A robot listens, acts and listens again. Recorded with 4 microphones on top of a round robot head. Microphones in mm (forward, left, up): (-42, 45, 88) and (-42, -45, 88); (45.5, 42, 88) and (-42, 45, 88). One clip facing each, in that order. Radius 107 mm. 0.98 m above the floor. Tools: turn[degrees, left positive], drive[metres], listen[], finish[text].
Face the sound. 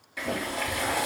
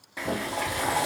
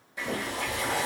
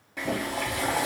Thought: The boiling: 150° right.
Action: turn[-150]
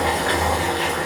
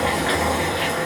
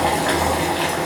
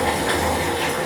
Action: finish[Found it: boiling, straight ahead, 1 to 2 m away.]